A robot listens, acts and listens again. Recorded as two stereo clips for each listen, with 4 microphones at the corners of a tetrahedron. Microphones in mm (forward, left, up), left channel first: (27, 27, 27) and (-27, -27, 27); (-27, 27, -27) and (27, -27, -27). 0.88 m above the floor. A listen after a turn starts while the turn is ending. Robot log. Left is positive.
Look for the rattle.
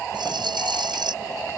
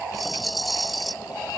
note: The rattle: 135° right.
cmd yaw -135
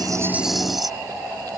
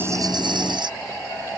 note: The rattle is now 45° right.
cmd yaw -45
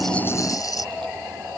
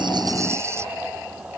note: The rattle is now 10° left.
cmd yaw +10
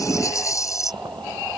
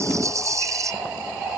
end: Found it: a rattle, straight ahead.